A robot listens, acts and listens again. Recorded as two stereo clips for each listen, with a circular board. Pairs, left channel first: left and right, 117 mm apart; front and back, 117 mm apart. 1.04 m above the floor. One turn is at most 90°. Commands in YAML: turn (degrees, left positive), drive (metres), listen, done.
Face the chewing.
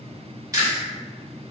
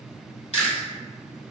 turn: -25
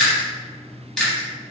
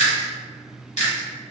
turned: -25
done: "Facing the chewing, 1 to 2 m away."